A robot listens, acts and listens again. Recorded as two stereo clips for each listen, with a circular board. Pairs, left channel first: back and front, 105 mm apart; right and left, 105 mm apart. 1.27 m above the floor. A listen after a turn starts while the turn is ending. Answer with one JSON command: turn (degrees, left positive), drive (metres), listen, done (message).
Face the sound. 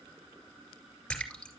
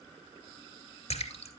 {"turn": -95}
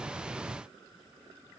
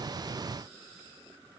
{"done": "Facing where the splash came from. I can't hear it now."}